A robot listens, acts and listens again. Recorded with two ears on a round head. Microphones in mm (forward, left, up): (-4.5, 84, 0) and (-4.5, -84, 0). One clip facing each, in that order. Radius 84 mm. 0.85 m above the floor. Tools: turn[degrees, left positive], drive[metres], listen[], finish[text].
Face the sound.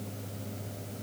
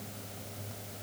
Action: listen[]
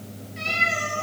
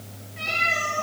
Thought: The cat meowing: about 60° left or 120° left.
Action: turn[60]
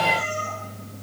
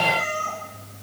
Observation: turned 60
Thought: So it is at 60° left.
Action: turn[60]
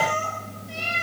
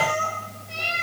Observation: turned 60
Thought: The cat meowing is now 15° left.
Action: turn[15]
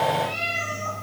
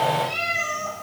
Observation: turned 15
Action: finish[Facing the cat meowing, over 4 m away.]